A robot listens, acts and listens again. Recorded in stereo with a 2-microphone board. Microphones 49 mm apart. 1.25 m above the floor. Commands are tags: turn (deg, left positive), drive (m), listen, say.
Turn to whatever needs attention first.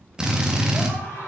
<turn deg="65"/>
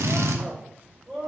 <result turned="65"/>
<say>Found it: a scream, straight ahead.</say>